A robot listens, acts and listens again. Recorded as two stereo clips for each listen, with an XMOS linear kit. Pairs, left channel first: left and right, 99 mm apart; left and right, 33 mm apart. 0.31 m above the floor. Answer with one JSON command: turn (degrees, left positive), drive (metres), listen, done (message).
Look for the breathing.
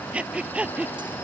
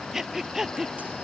{"turn": -30}
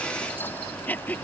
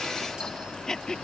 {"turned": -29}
{"turn": 15}
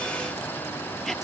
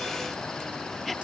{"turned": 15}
{"listen": true}
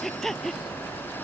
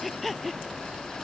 {"done": "Facing the breathing."}